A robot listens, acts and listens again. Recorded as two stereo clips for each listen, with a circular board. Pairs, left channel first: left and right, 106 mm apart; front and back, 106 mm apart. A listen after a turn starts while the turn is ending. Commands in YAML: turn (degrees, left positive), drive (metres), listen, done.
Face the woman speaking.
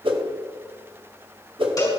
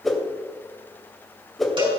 listen: true
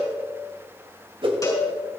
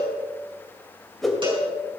listen: true
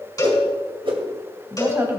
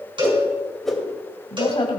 turn: -25
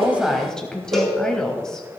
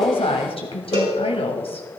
turn: 10
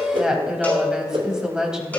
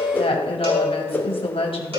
done: "Facing the woman speaking."